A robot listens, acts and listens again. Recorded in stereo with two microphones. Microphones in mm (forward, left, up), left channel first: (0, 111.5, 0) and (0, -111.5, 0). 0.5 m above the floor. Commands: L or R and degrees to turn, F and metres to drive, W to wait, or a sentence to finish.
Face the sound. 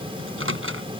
R90
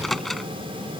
Facing the microwave.